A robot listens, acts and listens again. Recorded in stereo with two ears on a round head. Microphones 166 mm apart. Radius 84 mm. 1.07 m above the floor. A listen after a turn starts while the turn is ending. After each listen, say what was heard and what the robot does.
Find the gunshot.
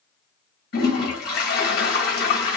Keep listening.
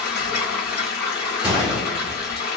Turn 30° right.
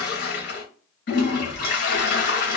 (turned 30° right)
Keep listening.
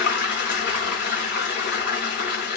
I heard a gunshot, but can't make it out now. It was about 25° left or 145° right.